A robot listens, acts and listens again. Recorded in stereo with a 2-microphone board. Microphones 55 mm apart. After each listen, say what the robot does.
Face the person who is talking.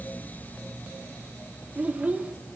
Turn 30° right.
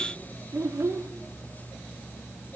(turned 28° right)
Turn 125° right.
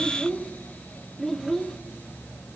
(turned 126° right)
Facing the child speaking.